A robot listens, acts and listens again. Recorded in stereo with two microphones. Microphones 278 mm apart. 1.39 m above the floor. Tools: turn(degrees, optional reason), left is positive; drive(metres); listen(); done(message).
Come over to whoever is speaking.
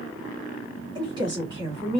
turn(degrees=-15, reason="The woman speaking: about 15° right or 165° right.")
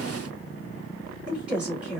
drive(metres=1.0)
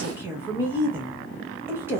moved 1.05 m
turn(degrees=-10, reason="The woman speaking is now 10° right.")
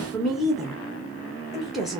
drive(metres=1.0)
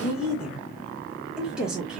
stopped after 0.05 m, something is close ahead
done("Arrived at the woman speaking, straight ahead.")